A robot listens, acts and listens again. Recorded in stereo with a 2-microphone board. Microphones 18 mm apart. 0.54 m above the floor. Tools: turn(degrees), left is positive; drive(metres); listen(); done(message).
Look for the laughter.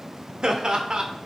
turn(degrees=-50)
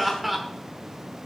turn(degrees=-15)
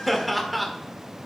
done("Facing the laughter, 1 to 2 m away.")